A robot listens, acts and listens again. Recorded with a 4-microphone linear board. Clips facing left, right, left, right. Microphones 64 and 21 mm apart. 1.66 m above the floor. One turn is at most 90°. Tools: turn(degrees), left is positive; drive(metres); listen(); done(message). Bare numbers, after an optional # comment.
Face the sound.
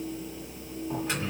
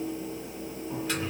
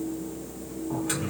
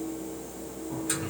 # The microwave: about 25° left or 155° left.
turn(25)
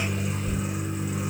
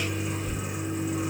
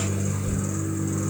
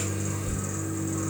done("Found it: a microwave, straight ahead, 1 to 2 m away.")